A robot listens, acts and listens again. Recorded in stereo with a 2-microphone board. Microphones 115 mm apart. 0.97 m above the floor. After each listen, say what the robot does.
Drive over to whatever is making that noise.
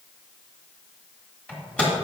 Turn 30° left.
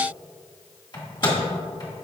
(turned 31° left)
Turn 140° left.
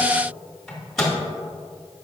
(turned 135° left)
Drive 1.0 m forward.
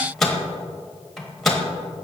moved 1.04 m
Drive 1.0 m forward.
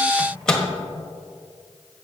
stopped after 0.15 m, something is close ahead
I am next to the microwave.